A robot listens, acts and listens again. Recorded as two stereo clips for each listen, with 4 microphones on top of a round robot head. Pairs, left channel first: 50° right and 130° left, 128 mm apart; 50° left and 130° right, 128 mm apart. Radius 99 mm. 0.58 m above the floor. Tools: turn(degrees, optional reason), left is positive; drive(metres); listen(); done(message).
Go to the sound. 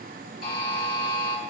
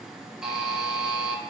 turn(degrees=-45, reason="The buzzer: 45° right.")
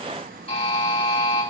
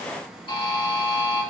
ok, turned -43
drive(metres=1.0)
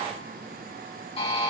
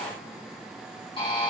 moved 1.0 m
drive(metres=1.0)
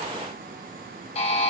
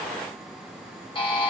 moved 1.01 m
drive(metres=1.0)
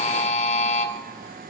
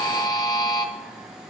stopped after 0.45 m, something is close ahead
turn(degrees=-15, reason="The buzzer is now 15° right.")
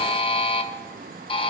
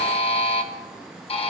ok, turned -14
done("I am next to the buzzer.")